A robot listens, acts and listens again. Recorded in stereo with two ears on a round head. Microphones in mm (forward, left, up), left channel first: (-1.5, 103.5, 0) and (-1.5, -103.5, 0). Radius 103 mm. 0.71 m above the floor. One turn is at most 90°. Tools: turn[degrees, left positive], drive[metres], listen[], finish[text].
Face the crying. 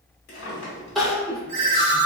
Action: turn[30]
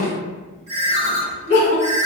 Thought: So it is at 150° left.
Action: turn[90]
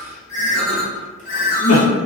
Thought: The crying is now 90° left.
Action: turn[90]
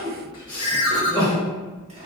Thought: The crying is now 20° left.
Action: turn[20]
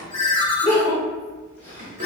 Thought: The crying is now 10° left.
Action: turn[10]
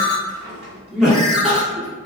Action: finish[Facing the crying, under 1 m away.]